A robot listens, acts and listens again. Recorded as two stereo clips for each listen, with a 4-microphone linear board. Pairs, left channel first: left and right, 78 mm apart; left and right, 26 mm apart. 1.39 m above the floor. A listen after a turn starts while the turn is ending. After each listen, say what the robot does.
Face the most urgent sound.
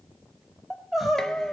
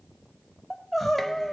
Turn 30° left.
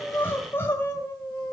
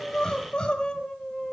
Turn 150° left.
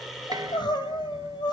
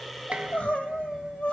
Turn 75° left.
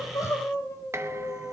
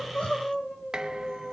Turn 35° left.
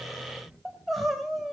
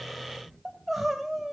Found it: crying, straight ahead, 2 to 4 m away.